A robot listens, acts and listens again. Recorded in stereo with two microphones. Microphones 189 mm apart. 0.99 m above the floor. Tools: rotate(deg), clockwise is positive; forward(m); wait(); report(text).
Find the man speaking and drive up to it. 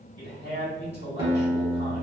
rotate(65)
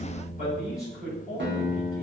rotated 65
rotate(55)
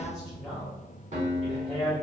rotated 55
forward(1.0)
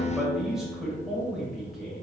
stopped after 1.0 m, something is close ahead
report("Arrived at the man speaking, straight ahead.")